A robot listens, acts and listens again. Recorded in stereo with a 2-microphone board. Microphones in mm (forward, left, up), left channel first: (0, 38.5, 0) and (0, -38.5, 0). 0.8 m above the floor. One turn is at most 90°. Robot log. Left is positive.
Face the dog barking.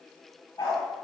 note: The dog barking: about 75° left or 105° left.
cmd yaw +75
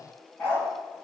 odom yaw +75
note: So it is at 20° left.
cmd yaw +20
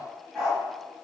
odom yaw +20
end: Found it: a dog barking, straight ahead.